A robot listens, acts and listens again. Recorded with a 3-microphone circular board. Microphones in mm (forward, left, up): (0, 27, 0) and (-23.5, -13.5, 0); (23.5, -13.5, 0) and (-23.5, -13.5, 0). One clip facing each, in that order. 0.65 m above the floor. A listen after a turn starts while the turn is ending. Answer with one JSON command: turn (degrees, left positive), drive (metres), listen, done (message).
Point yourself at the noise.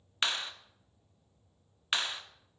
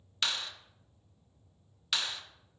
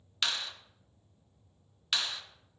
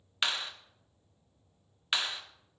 {"turn": 115}
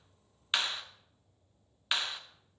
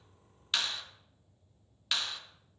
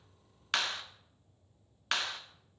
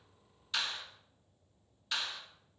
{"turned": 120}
{"done": "Found it: a clap, straight ahead."}